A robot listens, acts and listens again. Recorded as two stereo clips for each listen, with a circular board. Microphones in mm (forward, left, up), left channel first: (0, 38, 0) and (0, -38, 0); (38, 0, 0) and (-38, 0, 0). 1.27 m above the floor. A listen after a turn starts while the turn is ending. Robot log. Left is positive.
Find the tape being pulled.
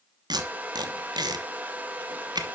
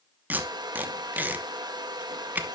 note: The tape being pulled: 115° right.
cmd yaw -115
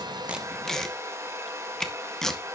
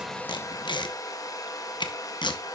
end: Found it: tape being pulled, straight ahead, 1 to 2 m away.